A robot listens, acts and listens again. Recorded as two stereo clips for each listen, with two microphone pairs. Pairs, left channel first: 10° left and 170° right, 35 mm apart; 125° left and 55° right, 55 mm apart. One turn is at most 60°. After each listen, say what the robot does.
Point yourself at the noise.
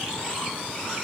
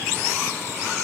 Keep listening.
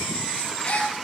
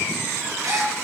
Turn 55° right.
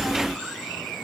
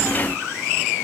I heard a gasp from this way, but can't make it out now.